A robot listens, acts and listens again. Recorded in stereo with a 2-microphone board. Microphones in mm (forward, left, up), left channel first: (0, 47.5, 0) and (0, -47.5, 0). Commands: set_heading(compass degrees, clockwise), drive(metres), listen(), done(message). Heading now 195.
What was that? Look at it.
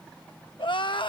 set_heading(130)
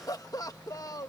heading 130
set_heading(85)
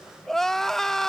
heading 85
done("Facing the crying.")